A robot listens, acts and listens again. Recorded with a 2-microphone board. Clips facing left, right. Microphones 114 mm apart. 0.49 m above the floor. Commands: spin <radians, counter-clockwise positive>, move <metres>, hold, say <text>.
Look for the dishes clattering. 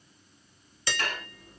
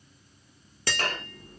spin -1.05
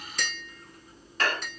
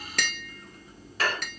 spin -0.17
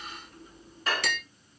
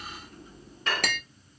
say Facing the dishes clattering, 1 to 2 m away.